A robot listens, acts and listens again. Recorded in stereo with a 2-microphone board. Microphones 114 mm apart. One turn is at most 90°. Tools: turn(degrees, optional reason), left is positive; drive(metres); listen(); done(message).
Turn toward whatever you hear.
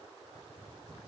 listen()
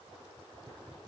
listen()
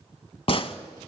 turn(degrees=55, reason="The gunshot: about 55° left or 125° left.")
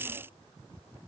listen()
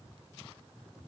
done("I heard a gunshot, but can't make it out now. It was about straight ahead or 70° left.")